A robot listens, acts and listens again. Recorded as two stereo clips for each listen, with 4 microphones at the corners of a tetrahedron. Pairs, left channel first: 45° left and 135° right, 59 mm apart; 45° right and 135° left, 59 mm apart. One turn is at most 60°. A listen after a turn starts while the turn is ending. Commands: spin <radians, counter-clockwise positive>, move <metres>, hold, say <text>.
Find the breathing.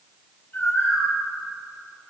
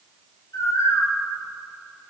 hold
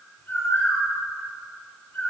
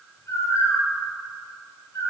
hold
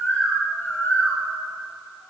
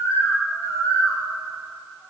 say I can't make out breathing, only a bird.